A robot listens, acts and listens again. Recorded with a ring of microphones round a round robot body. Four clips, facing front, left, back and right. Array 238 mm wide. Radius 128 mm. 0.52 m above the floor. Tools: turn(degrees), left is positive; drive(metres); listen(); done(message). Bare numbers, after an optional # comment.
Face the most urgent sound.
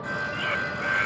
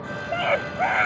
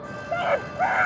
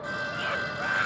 # The scream: 135° left.
turn(135)
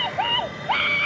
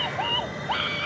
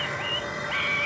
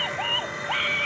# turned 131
done("Found it: a scream, straight ahead.")